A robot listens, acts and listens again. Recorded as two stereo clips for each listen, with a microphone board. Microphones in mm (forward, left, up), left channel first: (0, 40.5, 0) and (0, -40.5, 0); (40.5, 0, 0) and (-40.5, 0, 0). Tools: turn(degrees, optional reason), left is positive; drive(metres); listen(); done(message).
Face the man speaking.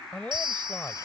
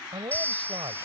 turn(degrees=160, reason="The man speaking: 160° left.")
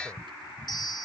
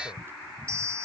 listen()
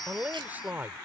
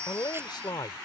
turn(degrees=-25, reason="The man speaking is now 25° right.")
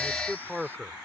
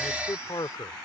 turn(degrees=-10, reason="The man speaking is now 10° right.")
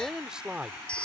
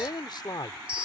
turn(degrees=-15, reason="The man speaking is now 15° right.")
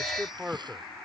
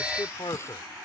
turn(degrees=-15, reason="The man speaking is now 15° right.")
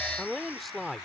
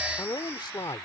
done("Facing the man speaking.")